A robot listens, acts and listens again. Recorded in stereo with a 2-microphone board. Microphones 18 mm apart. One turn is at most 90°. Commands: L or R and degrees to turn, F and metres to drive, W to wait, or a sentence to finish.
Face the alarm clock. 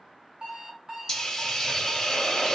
R45
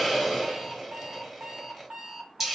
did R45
R90
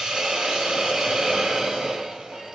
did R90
W
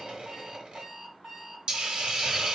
R40
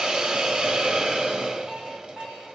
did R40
R15
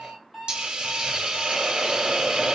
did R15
Facing the alarm clock, 1 to 2 m away.